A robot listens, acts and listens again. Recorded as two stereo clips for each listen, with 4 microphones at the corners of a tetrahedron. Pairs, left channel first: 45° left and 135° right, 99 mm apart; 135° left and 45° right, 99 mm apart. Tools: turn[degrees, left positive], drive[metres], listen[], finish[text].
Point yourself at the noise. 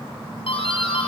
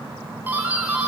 Thought: The doorbell: 25° left.
Action: turn[25]
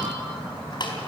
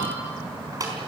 Action: finish[Found it: a doorbell, straight ahead.]